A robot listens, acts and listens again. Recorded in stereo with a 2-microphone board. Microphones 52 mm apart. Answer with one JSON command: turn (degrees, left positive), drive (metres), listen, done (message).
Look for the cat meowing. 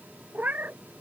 {"turn": -35}
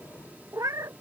{"turn": -100}
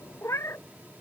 {"turn": 60}
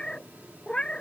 {"turn": 15}
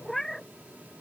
{"done": "Found it: a cat meowing, straight ahead."}